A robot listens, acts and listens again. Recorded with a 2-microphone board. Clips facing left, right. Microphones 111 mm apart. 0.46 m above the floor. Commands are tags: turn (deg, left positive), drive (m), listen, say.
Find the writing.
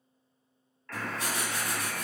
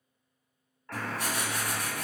<turn deg="-70"/>
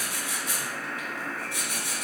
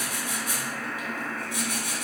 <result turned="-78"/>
<turn deg="-15"/>
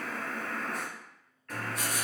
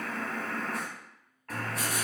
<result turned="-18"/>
<say>Facing the writing, 1 to 2 m away.</say>